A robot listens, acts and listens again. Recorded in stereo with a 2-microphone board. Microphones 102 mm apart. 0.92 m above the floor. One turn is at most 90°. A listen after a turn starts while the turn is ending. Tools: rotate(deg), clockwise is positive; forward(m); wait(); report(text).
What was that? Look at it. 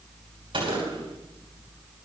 rotate(65)
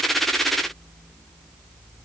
wait()
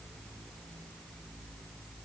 report("I heard a gunshot, but can't make it out now. It was about straight ahead or 50° right.")